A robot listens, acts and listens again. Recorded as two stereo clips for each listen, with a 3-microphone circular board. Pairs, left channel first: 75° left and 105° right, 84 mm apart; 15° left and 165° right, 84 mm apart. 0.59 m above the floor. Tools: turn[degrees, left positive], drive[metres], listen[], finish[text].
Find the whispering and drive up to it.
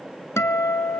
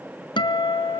Action: listen[]
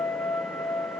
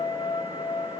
Action: listen[]
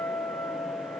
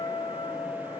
Action: finish[I can't make out whispering to turn to.]